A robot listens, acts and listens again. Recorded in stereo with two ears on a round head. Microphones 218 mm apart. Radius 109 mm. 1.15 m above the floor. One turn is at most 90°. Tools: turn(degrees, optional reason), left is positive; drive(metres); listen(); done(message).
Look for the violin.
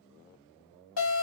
listen()
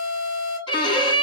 turn(degrees=20, reason="The violin: about 20° left or 160° left.")
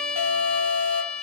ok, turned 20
done("Found it: a violin, straight ahead.")